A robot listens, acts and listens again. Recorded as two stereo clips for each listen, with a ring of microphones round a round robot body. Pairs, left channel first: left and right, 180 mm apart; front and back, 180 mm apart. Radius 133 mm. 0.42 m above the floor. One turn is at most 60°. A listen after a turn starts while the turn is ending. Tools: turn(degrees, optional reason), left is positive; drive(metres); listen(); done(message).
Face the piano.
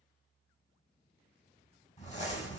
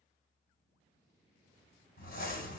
listen()
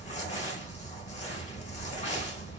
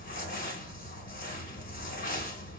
listen()
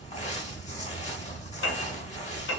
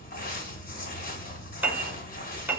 turn(degrees=60, reason="The piano: 100° left.")
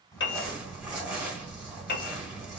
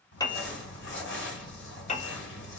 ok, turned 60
turn(degrees=55, reason="The piano is now 55° left.")
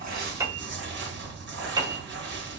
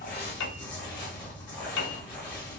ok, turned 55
turn(degrees=-20, reason="The piano is now 20° right.")
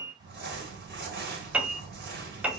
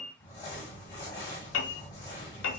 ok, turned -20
done("Facing the piano, under 1 m away.")